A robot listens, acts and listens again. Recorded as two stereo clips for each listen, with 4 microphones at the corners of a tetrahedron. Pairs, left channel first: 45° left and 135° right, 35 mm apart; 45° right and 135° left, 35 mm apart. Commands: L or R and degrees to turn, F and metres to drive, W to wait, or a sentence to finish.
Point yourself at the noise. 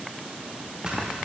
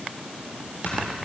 R70
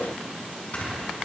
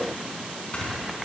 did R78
Facing the snoring.